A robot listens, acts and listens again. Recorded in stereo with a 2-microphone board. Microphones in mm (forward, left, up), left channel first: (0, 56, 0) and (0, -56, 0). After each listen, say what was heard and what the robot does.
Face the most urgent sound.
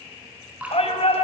The shout: about 65° left or 115° left. Turn 65° left.
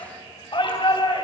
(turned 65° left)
So it is at 50° left. Turn 50° left.
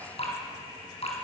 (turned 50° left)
Keep listening.
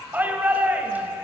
The shout is now 15° right. Turn 15° right.
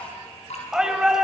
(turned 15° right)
Found it: a shout, straight ahead.